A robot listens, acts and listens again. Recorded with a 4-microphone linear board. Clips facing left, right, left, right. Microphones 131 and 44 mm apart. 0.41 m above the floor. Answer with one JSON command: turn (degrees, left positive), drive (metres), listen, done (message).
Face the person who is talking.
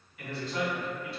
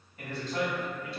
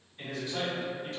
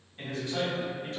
{"turn": -40}
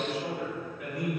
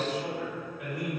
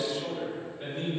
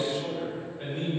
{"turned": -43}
{"turn": -95}
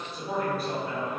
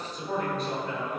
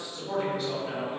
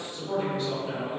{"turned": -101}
{"done": "Found it: a man speaking, straight ahead."}